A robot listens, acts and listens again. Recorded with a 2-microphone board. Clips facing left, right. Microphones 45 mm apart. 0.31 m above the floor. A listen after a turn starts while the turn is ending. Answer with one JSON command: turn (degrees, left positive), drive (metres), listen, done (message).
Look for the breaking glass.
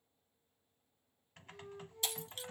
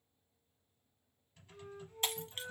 {"turn": -45}
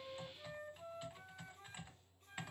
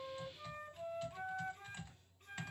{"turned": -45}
{"listen": true}
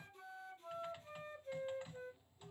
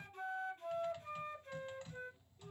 {"done": "I heard breaking glass, but can't make it out now. It was about straight ahead or 90° right."}